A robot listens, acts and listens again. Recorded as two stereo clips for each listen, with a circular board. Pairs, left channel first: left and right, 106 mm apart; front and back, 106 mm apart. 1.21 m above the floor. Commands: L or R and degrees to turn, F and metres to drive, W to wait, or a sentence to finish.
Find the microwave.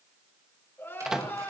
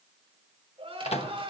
Facing the microwave.